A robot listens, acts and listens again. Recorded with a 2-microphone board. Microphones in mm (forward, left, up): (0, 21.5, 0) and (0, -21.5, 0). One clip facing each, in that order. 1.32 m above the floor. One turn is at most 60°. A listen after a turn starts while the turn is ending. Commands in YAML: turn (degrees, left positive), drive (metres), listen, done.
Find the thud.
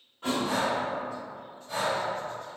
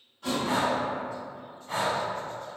turn: 30
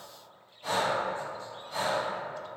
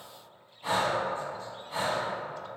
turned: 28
listen: true
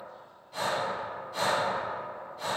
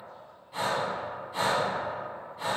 done: "I heard a thud, but can't make it out now. It was about straight ahead or 120° left."